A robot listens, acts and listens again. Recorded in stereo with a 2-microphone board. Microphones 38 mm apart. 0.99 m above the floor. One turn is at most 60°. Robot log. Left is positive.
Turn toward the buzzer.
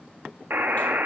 note: The buzzer: about 60° right or 120° right.
cmd yaw -60
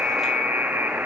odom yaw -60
note: So it is at 55° right.
cmd yaw -55
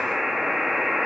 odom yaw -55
note: The buzzer is now 10° right.
cmd yaw -10
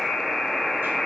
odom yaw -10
end: Found it: a buzzer, straight ahead, under 1 m away.